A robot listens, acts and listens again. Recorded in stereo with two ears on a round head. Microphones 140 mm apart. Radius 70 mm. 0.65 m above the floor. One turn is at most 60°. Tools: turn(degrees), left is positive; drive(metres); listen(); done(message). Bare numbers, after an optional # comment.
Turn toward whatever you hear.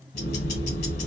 # The ticking: about 70° left or 110° left.
turn(60)
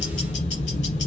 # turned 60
# So it is at 45° left.
turn(45)
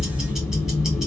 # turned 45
done("Found it: ticking, straight ahead.")